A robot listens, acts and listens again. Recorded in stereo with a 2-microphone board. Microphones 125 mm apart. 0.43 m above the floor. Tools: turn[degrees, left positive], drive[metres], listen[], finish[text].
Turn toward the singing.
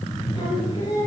Thought: The singing: about 40° left or 140° left.
Action: turn[40]
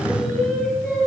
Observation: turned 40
Action: finish[Found it: singing, straight ahead.]